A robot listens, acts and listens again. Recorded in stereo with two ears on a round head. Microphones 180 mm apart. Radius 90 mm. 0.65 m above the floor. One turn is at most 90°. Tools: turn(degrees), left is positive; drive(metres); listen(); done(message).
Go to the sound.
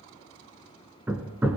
turn(degrees=-30)
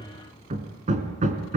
turn(degrees=-90)
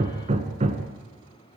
turn(degrees=-35)
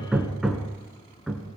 drive(metres=1.0)
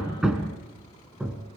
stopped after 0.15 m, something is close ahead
done("Something is in my way. I am facing the hammering but have not reached it.")